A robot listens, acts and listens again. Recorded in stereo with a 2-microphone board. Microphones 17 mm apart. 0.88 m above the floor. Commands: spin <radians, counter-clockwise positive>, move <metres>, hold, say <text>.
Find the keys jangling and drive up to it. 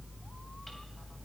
hold
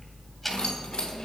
spin 1.22
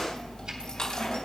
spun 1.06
spin 0.87
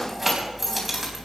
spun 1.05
spin -0.17
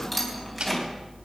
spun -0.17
move 1.0
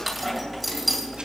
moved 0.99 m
move 1.0
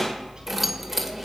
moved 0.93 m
spin -0.17
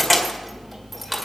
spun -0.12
move 1.0
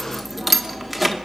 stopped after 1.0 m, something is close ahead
say Arrived at the keys jangling, straight ahead.